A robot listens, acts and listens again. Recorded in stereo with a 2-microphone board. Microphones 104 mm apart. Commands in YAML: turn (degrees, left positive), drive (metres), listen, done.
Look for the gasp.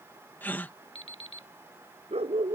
turn: 15
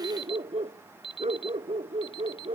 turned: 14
listen: true
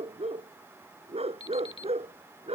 done: "I heard a gasp, but can't make it out now. It was about 5° left or 150° left."